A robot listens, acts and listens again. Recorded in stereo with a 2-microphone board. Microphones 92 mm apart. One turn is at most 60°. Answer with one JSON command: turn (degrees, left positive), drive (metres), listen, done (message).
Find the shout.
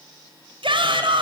{"turn": -60}
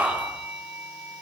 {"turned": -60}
{"turn": -15}
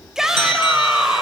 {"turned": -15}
{"done": "Found it: a shout, straight ahead."}